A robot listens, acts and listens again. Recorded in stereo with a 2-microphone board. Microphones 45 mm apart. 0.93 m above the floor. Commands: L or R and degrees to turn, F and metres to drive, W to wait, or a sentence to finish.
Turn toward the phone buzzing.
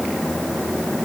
W
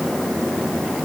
W
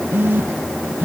R50
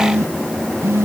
R85
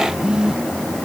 R20
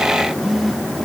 Found it: a phone buzzing, straight ahead.